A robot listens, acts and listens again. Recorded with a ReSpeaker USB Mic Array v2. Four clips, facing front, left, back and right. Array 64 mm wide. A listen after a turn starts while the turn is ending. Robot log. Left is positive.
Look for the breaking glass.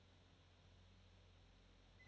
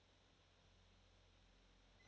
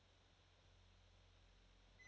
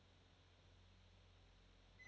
cmd idle
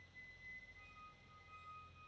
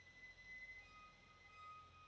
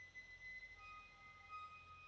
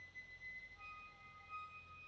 cmd idle
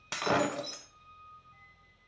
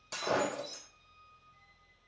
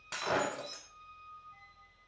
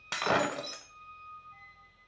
note: The breaking glass: 65° right.
cmd yaw -65
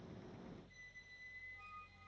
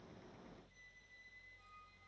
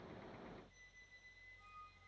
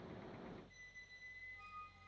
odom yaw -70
end: Facing where the breaking glass came from. I can't hear it now.